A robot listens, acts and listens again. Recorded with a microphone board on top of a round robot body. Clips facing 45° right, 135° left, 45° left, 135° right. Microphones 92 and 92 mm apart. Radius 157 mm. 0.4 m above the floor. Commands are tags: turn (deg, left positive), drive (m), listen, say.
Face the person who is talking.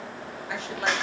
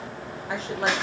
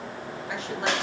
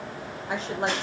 <turn deg="180"/>
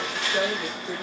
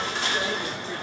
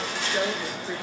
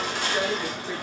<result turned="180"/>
<turn deg="-40"/>
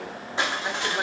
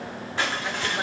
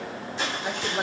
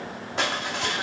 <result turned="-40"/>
<listen/>
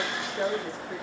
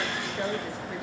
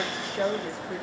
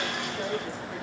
<turn deg="15"/>
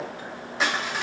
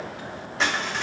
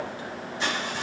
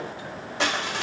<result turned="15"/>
<listen/>
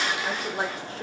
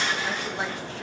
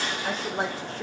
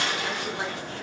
<say>Found it: a woman speaking, straight ahead.</say>